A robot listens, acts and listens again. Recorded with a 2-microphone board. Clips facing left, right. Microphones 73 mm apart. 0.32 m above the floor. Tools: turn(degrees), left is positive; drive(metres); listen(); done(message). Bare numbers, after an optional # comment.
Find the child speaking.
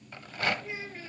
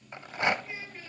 # The child speaking: about 25° left or 155° left.
turn(25)
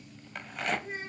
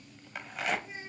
# So it is at 135° left.
turn(135)
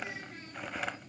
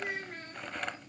# The child speaking is now 50° right.
turn(-50)
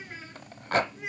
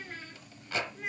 done("Facing the child speaking.")